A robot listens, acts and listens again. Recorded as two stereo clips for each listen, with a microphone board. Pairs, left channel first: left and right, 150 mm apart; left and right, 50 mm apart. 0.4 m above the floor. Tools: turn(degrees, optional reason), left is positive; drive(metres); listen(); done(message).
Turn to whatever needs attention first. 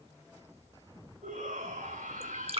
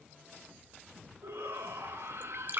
turn(degrees=-65, reason="The shout: about 65° right or 115° right.")
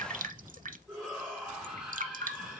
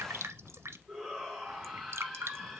done("Found it: a shout, straight ahead, over 4 m away.")